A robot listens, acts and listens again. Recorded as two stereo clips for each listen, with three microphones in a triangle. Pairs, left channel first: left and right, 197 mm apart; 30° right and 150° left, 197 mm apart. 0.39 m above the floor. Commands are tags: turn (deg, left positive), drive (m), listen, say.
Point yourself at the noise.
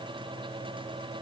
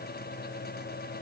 <listen/>
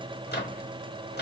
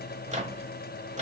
<turn deg="105"/>
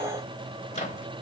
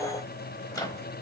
<turn deg="40"/>
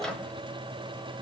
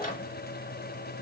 <say>Facing the microwave.</say>